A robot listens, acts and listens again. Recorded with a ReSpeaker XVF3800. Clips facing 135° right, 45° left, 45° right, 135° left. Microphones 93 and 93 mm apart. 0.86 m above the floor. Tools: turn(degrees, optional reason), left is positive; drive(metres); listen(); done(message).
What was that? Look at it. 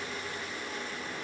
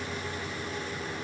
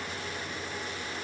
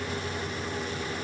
listen()
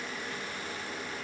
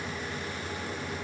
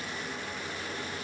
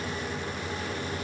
listen()
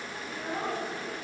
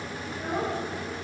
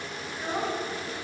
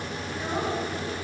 turn(degrees=40, reason="The child speaking: 40° left.")
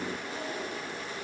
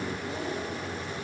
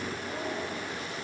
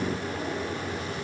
turn(degrees=10, reason="The child speaking is now 10° left.")
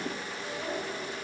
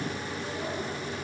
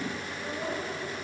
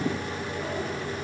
done("Facing the child speaking, 2 to 4 m away.")